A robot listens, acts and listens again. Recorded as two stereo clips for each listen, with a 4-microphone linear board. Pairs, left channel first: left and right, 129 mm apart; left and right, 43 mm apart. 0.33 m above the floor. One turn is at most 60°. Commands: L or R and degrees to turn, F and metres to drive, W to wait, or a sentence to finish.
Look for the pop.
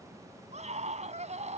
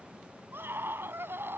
W
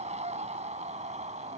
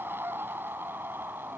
W
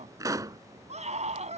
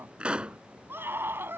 R25
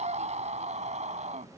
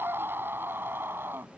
W
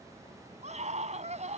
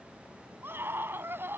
I heard a pop, but can't make it out now. It was about straight ahead or 130° right.